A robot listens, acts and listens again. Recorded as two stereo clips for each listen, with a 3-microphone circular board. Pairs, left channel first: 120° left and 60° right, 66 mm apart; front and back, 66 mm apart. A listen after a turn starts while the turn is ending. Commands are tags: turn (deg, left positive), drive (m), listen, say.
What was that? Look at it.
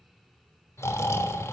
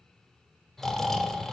<turn deg="85"/>
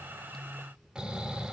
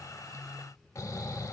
<turn deg="15"/>
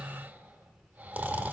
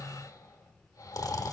<say>Facing the snoring, 1 to 2 m away.</say>